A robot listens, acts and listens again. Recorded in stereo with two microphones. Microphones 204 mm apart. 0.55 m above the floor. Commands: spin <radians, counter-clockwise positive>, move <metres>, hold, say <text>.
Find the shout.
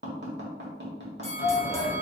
spin 0.61
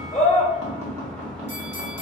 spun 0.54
say Found it: a shout, straight ahead.